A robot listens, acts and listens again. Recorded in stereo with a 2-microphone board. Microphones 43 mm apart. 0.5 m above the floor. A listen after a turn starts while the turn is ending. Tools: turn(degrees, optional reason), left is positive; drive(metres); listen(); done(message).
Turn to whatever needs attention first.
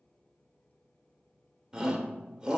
turn(degrees=-15, reason="The shout: about 15° right or 165° right.")
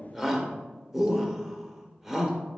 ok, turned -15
done("Facing the shout, 1 to 2 m away.")